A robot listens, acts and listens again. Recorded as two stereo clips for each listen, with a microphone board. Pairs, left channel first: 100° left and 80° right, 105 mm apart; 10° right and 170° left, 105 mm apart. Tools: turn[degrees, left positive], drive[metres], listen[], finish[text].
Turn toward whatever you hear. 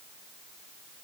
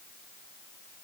Action: listen[]
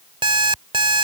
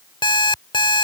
Thought: The alarm clock: 45° right.
Action: turn[-45]
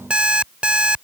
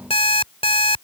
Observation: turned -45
Action: finish[Facing the alarm clock.]